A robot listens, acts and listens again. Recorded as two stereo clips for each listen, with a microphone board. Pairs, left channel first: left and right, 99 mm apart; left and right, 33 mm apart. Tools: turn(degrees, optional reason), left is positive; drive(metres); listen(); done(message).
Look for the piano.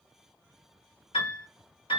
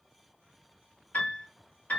turn(degrees=60, reason="The piano: about 60° left or 120° left.")
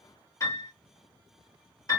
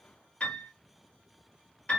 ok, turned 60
turn(degrees=40, reason="So it is at 40° left.")
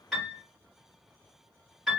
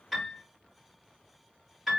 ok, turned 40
done("Found it: a piano, straight ahead.")